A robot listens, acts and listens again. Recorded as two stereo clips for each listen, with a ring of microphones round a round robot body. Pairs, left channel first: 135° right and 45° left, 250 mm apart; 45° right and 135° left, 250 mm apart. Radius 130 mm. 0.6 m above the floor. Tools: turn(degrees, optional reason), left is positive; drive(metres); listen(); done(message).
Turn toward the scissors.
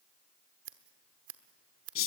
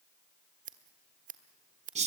turn(degrees=75, reason="The scissors: 75° left.")
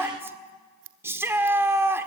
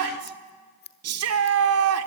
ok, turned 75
done("Facing the scissors, 1 to 2 m away.")